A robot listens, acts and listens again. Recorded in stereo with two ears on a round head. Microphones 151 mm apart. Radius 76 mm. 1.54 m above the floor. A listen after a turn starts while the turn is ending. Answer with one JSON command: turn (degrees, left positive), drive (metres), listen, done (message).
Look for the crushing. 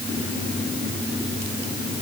{"listen": true}
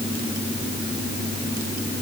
{"listen": true}
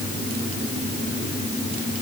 {"done": "I can't make out crushing to turn to."}